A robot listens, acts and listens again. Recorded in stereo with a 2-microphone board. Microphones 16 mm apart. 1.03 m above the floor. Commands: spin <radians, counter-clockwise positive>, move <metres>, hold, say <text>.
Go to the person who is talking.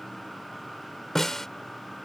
hold
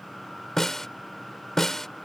hold
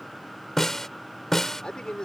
spin 1.22
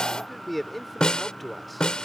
move 1.0
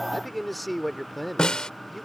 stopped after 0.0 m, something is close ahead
say Something is in my way. I am facing the man speaking but have not reached it.